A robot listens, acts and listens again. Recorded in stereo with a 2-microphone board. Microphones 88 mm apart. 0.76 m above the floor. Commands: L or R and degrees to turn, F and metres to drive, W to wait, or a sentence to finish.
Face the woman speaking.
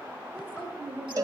R15
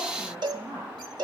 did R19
R30
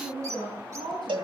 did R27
R120
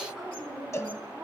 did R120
Facing the woman speaking.